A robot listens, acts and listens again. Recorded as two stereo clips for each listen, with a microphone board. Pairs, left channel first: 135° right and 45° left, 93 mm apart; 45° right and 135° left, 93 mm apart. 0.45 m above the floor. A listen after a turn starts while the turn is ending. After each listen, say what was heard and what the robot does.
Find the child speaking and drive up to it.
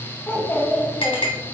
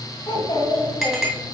The child speaking: 70° right. Turn 70° right.
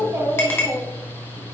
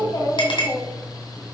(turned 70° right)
Drive 1.0 m forward.
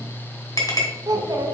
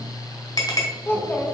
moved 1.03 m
The child speaking is now 15° left. Turn 15° left.
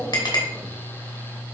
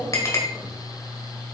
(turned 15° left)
Keep listening.
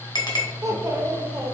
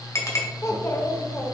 Drive 1.0 m forward.
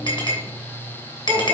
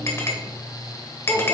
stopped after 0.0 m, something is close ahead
Keep listening.
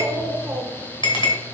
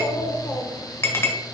I am next to the child speaking.